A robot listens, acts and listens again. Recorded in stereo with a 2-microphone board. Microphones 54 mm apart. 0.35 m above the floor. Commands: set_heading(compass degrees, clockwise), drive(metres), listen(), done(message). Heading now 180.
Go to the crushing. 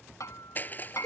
set_heading(145)
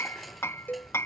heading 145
listen()
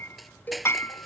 drive(1.0)
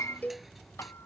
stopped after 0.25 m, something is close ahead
listen()
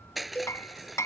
done("Something is in my way. I am facing the crushing but have not reached it.")